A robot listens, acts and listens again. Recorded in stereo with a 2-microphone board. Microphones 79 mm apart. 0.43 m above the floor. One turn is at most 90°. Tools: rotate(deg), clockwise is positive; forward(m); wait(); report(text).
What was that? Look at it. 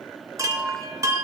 rotate(40)
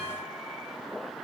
wait()
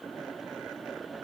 wait()
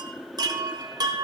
rotate(90)
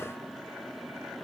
wait()
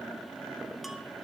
wait()
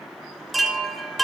report("Found it: a chime, straight ahead, under 1 m away.")